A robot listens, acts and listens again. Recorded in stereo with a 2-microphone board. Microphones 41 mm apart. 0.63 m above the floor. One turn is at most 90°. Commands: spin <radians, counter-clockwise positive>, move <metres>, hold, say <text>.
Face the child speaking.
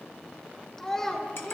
spin 0.52
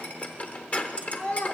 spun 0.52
spin 1.57
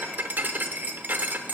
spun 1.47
spin 0.96
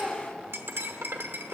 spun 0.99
say Facing the child speaking, 1 to 2 m away.